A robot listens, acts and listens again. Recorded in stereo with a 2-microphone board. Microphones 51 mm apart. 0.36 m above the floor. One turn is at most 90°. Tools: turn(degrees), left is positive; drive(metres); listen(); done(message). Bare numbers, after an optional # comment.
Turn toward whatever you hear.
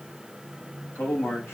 # The man speaking: about 60° left or 120° left.
turn(60)
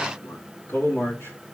# So it is at 55° left.
turn(55)
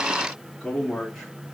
# The man speaking is now 15° left.
turn(15)
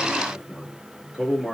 # The man speaking is now 10° left.
turn(10)
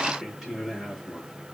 done("Found it: a man speaking, straight ahead, over 4 m away.")